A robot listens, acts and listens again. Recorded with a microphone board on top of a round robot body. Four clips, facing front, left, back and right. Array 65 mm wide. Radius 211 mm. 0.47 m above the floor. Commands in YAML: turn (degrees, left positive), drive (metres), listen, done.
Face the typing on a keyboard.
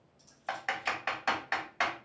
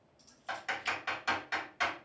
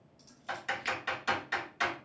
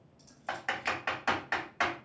turn: -30
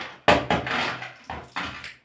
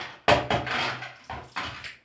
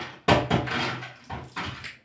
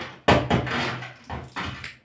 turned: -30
turn: 10
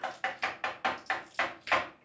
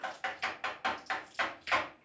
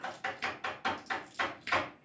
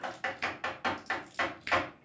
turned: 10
done: "Facing the typing on a keyboard, 1 to 2 m away."